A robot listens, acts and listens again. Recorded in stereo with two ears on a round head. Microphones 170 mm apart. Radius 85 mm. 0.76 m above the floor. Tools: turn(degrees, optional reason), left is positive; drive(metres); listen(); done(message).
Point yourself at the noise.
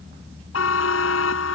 turn(degrees=90)
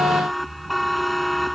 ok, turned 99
done("Found it: a buzzer, straight ahead.")